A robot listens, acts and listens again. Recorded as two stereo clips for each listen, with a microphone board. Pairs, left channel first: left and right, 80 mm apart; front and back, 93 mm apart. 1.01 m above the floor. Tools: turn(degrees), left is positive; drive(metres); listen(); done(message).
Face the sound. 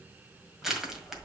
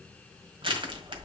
turn(degrees=-175)
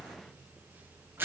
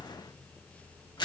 turn(degrees=-30)
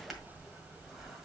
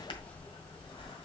done("Found it: crushing, straight ahead, 1 to 2 m away.")